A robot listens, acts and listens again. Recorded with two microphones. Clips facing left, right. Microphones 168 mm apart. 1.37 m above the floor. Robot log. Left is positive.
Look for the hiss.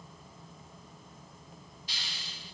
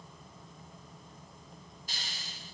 note: The hiss: about 45° right or 135° right.
cmd yaw -45
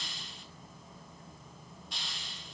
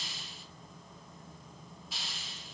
end: Found it: a hiss, straight ahead.